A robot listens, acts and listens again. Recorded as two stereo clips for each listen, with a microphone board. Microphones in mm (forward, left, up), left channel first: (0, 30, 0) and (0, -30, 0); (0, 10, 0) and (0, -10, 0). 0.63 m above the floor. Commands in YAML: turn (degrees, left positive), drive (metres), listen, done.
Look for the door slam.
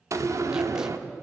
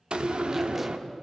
turn: -60
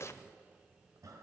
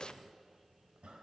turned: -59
listen: true
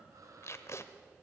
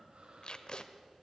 done: "I heard a door slam, but can't make it out now. It was about straight ahead or 65° right."